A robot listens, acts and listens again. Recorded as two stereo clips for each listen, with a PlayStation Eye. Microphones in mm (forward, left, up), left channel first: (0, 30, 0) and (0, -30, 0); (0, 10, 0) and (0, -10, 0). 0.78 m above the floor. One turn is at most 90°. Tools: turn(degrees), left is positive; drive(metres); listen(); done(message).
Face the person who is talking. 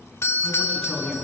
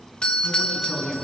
turn(degrees=30)
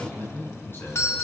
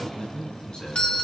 turn(degrees=90)
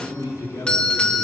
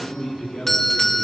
turn(degrees=80)
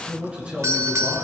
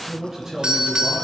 turn(degrees=-20)
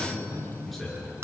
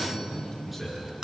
done("Found it: a man speaking, straight ahead, over 4 m away.")